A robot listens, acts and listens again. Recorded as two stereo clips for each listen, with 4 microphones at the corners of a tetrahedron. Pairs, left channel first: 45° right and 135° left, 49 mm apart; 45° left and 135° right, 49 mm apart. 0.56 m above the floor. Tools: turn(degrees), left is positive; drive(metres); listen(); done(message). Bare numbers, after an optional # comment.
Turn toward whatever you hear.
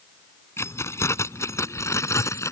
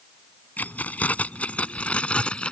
# The keys jangling: 25° right.
turn(-25)
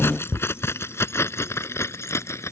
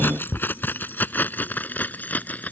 # The keys jangling is now 15° right.
turn(-15)
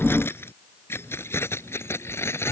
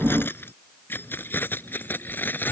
# The keys jangling is now 10° right.
turn(-10)
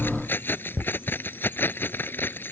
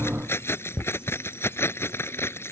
done("Facing the keys jangling.")